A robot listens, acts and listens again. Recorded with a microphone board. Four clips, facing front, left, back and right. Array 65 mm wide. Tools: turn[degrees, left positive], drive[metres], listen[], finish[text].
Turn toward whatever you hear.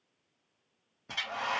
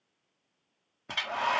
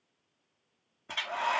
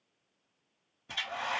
Thought: The hair dryer: 105° left.
Action: turn[105]
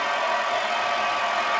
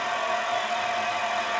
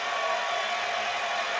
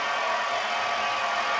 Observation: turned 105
Thought: The hair dryer is now 20° right.
Action: turn[-20]
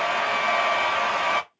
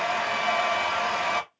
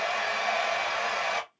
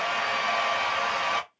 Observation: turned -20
Action: finish[Facing the hair dryer.]